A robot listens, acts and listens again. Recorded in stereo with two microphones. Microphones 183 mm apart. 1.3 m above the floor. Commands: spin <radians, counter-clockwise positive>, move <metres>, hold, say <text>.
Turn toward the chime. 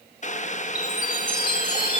spin 0.44
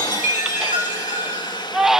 spin 2.27
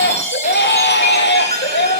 spin 0.70
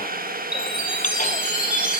say Facing the chime, over 4 m away.